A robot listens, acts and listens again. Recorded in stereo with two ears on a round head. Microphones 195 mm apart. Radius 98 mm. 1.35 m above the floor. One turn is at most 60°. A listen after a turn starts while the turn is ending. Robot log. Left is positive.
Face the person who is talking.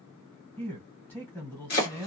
cmd yaw +30
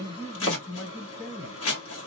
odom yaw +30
note: So it is at 140° left.
cmd yaw +60
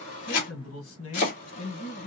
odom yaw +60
note: The man speaking is now 80° left.
cmd yaw +60
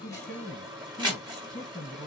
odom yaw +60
note: The man speaking is now 25° left.
cmd yaw +25
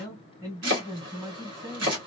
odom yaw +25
note: The man speaking is now 15° right.
cmd yaw -15
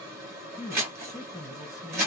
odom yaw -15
end: Found it: a man speaking, straight ahead.